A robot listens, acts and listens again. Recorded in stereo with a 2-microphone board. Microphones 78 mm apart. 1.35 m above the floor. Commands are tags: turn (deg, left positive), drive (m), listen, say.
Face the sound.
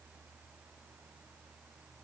<listen/>
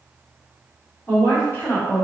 <turn deg="25"/>
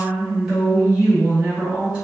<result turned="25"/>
<turn deg="-10"/>
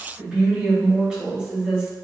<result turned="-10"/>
<say>Found it: a woman speaking, straight ahead.</say>